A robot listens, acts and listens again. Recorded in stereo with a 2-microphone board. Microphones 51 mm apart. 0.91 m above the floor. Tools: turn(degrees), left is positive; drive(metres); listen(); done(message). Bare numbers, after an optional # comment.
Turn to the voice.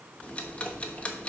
listen()
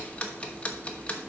listen()
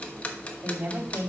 # The woman speaking: about 50° right or 130° right.
turn(-50)
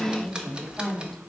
done("Facing the woman speaking.")